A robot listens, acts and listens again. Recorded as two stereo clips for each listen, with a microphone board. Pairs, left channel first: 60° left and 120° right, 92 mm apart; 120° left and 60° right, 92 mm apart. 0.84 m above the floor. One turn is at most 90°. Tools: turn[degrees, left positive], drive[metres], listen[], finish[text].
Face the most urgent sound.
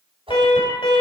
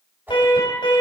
Thought: The alarm: 85° left.
Action: turn[85]
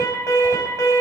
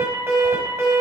Action: finish[Found it: an alarm, straight ahead, over 4 m away.]